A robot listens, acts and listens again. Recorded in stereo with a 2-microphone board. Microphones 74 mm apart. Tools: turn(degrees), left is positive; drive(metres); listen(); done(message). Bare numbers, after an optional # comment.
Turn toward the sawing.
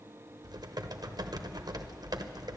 listen()
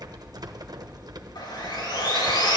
turn(90)
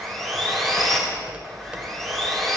done("Found it: sawing, straight ahead, 2 to 4 m away.")